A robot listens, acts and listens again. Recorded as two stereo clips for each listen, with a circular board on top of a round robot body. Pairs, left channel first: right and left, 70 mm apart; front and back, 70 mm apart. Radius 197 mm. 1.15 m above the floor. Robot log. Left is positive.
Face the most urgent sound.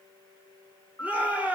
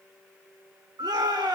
note: The shout: 160° left.
cmd yaw +160
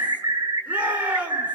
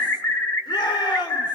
note: The shout is now 20° left.
cmd yaw +20
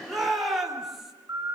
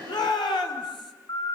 end: Facing the shout.